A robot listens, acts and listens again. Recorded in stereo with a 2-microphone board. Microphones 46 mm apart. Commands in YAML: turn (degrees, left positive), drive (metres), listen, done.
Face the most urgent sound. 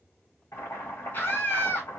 turn: 50
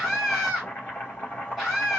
done: "Found it: a scream, straight ahead."